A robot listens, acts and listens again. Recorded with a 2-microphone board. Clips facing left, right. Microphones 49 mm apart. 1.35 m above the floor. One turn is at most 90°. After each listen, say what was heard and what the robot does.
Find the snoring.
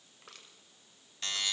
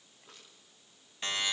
Keep listening.
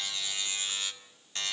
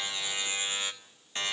Keep listening.
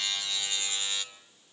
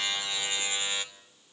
I can't make out snoring to turn to.